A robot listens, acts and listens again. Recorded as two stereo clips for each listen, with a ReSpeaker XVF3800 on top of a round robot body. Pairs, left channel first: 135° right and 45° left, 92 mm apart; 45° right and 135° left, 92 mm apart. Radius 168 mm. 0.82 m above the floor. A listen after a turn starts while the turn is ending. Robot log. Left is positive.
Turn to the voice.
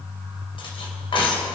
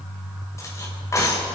cmd idle
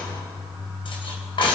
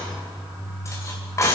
cmd idle
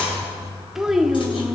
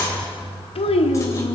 note: The child speaking: 40° right.
cmd yaw -40
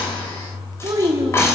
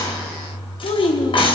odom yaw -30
note: The child speaking is now 10° right.
cmd yaw -10
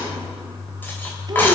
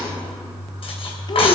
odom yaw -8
cmd idle
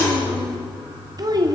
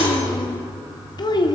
end: Found it: a child speaking, straight ahead, 1 to 2 m away.